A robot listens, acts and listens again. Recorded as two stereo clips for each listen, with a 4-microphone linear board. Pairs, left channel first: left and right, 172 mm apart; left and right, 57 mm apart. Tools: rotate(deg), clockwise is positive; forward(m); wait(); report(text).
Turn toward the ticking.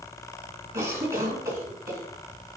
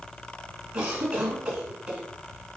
wait()
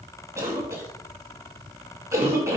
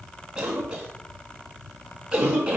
wait()
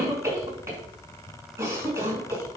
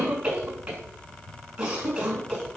report("I can't make out ticking, only a cough.")